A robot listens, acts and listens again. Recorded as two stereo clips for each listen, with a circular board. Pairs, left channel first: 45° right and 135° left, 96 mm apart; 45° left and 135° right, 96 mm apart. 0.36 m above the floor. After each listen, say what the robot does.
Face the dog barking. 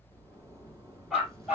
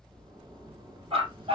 Turn 145° right.
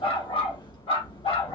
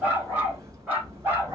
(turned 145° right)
Turn 65° right.
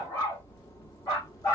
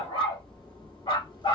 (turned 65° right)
Turn 15° left.
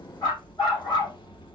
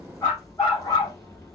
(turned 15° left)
Facing the dog barking, over 4 m away.